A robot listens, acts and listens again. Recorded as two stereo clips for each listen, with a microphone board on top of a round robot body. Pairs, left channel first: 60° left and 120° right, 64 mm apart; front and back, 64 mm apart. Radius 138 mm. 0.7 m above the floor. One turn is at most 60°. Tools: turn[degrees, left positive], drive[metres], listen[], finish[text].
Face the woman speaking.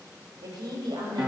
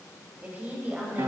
Thought: The woman speaking: 115° right.
Action: turn[-60]
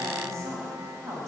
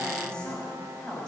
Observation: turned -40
Thought: The woman speaking is now 80° right.
Action: turn[-60]
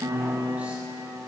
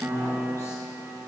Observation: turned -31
Thought: Nothing new. It was at 50° right.
Action: turn[-50]
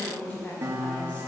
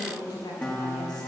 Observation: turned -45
Thought: The woman speaking is now 10° right.
Action: turn[-10]
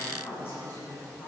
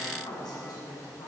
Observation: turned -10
Action: finish[Found it: a woman speaking, straight ahead.]